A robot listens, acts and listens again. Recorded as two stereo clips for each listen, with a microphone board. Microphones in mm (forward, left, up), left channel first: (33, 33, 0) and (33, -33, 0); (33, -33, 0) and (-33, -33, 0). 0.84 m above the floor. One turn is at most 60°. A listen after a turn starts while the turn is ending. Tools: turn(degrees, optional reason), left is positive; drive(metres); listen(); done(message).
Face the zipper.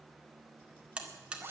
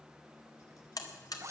turn(degrees=-60, reason="The zipper: 140° right.")
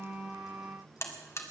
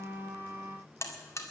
turn(degrees=-60, reason="Nothing new. It was at 80° right.")
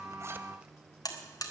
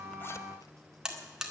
turn(degrees=-20, reason="Nothing new. It was at 20° right.")
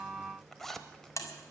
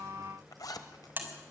done("Facing the zipper, 1 to 2 m away.")